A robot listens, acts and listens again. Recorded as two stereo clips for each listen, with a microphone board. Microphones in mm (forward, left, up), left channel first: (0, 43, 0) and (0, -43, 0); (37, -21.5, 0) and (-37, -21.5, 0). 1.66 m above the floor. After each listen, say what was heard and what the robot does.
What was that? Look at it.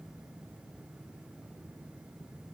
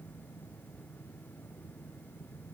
Keep listening.
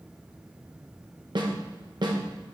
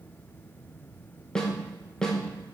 The snare drum: 80° right. Turn 80° right.
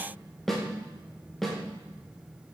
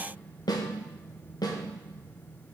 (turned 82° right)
Found it: a snare drum, straight ahead.